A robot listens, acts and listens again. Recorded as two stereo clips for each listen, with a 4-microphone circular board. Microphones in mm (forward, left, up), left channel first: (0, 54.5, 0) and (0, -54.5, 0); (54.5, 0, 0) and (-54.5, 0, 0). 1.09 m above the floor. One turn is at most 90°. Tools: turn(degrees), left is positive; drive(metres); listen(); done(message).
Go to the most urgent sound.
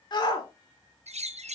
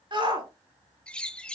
turn(degrees=90)
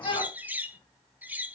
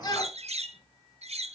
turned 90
turn(degrees=50)
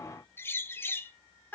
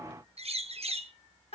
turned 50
turn(degrees=15)
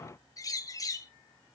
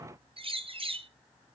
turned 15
listen()
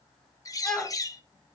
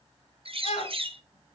drive(metres=1.0)
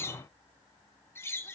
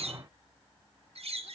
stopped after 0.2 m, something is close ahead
listen()
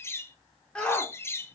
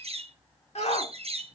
turn(degrees=10)
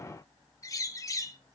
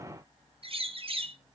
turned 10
listen()
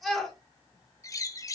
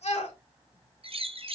done("Something is in my way. I am facing the shout but have not reached it.")